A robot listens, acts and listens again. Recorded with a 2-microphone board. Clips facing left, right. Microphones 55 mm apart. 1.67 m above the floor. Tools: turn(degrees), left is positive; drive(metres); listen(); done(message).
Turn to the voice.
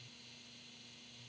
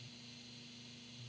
listen()
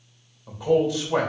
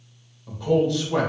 turn(degrees=30)
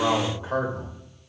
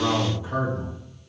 turn(degrees=145)
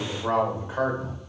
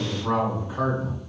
turn(degrees=55)
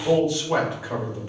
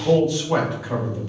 turn(degrees=20)
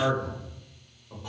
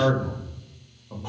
done("Facing the man speaking, 1 to 2 m away.")